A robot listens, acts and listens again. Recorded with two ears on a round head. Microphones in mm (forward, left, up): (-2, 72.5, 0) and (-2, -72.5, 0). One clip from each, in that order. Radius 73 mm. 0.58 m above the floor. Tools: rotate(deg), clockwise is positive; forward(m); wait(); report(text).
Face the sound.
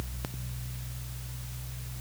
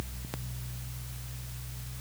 wait()
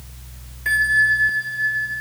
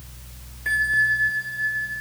rotate(-20)
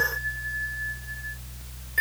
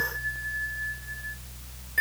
wait()
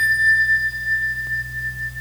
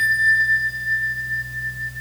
report("Facing the bell.")